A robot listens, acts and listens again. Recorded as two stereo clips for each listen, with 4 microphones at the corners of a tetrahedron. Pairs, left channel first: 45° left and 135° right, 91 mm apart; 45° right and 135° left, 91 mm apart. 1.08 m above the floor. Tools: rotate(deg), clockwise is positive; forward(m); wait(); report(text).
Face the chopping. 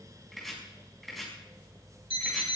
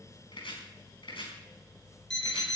rotate(45)
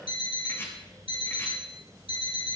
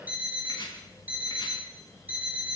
wait()
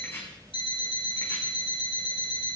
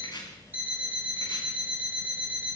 wait()
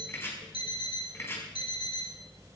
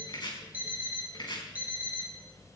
rotate(15)
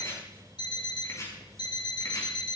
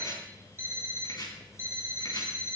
report("Facing the chopping, over 4 m away.")